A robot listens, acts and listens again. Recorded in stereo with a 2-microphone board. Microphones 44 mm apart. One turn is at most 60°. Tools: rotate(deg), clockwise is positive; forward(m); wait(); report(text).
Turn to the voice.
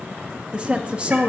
rotate(25)
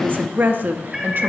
rotate(60)
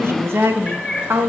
rotate(60)
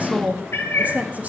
rotate(40)
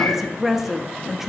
report("Facing the woman speaking.")